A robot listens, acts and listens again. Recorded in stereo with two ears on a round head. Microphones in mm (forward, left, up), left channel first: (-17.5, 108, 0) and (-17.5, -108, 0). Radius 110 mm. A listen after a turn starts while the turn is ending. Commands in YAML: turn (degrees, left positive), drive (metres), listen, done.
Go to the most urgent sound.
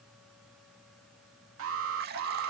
turn: -65
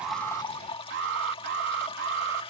turn: -50
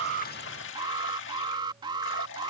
turn: -20
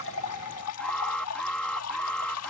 drive: 1.0
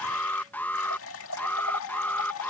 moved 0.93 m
turn: 10
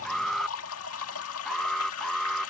drive: 1.0
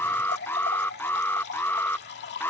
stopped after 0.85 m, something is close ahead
turn: 10
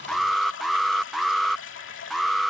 done: "I am next to the alarm."